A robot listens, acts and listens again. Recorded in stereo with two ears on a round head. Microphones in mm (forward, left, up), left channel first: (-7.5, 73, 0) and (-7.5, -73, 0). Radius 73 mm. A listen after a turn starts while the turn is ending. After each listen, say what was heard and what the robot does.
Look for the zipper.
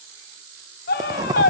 The zipper: about 20° right or 160° right. Turn 20° right.
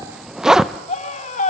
Facing the zipper, under 1 m away.